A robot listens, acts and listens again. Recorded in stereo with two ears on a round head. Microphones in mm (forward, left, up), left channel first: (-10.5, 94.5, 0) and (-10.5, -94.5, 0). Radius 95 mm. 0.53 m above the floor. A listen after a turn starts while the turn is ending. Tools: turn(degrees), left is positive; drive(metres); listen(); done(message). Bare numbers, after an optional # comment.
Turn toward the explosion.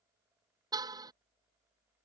listen()
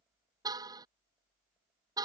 listen()
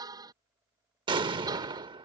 # The explosion: about 20° right or 160° right.
turn(-20)
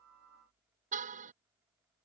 listen()
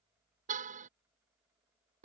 done("I heard an explosion, but can't make it out now. It was about straight ahead or 140° right.")